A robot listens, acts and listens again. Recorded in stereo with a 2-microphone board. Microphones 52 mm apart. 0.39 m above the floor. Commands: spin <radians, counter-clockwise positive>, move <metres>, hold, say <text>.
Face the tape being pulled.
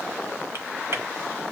hold
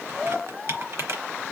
hold
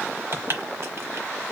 say I can't make out tape being pulled, only typing on a keyboard.